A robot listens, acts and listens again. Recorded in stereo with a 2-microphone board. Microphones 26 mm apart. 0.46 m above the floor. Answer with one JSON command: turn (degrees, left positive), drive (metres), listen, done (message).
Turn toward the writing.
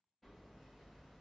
{"listen": true}
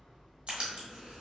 {"turn": -55}
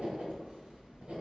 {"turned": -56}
{"turn": -65}
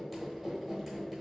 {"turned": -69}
{"done": "Found it: writing, straight ahead."}